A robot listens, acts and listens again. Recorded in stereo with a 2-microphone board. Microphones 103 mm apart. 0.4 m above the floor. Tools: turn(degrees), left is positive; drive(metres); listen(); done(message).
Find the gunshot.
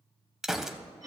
turn(degrees=-30)
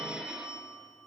listen()
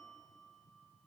done("I heard a gunshot, but can't make it out now. It was about 25° left or 145° right.")